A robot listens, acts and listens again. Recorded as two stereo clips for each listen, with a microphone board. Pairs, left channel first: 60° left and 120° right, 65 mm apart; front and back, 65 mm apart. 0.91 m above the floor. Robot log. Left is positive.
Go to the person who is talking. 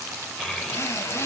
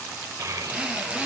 note: The child speaking: 145° left.
cmd yaw +145
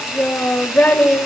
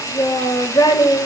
cmd fwd 1.0
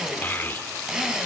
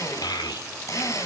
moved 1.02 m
cmd fwd 1.0
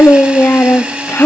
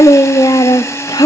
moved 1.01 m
cmd fwd 1.0
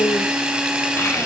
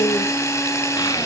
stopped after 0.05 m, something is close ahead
cmd idle
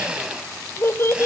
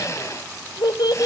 note: The child speaking is now 10° left.
cmd yaw +10
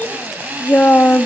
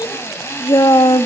end: I am next to the child speaking.